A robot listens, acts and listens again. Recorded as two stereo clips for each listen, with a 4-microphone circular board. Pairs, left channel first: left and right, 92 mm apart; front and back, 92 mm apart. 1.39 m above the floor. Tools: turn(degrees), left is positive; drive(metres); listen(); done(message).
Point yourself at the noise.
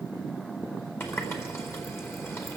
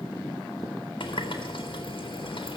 turn(degrees=30)
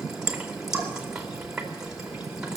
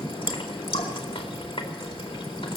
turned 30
done("Facing the running tap, 2 to 4 m away.")